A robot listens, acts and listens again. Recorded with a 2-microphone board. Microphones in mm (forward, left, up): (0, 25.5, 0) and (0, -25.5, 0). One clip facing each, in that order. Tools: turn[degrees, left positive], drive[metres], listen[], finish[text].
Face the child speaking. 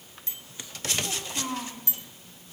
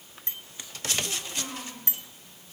Thought: The child speaking: about 50° left or 130° left.
Action: turn[50]
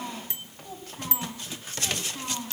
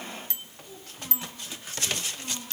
Thought: So it is at 90° left.
Action: turn[90]
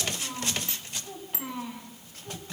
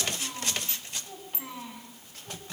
Action: finish[Facing the child speaking, over 4 m away.]